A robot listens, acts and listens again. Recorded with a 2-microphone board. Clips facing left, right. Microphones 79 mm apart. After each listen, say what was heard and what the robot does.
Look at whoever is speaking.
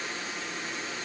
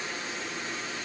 Keep listening.
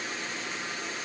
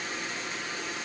Keep listening.
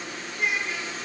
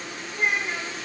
The child speaking: about 40° right or 140° right. Turn 40° right.
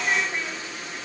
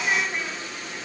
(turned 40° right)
Keep listening.
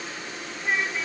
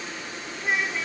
Facing the child speaking, 2 to 4 m away.